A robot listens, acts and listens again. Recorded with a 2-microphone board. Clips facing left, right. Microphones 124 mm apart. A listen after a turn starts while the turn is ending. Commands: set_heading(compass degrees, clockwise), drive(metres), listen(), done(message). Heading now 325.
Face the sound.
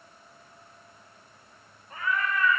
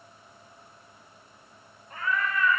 set_heading(300)
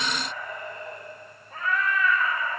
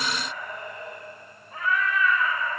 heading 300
set_heading(170)
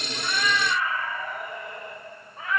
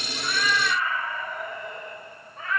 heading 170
set_heading(160)
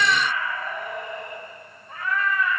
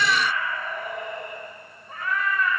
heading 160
done("Found it: a cat meowing, straight ahead, 1 to 2 m away.")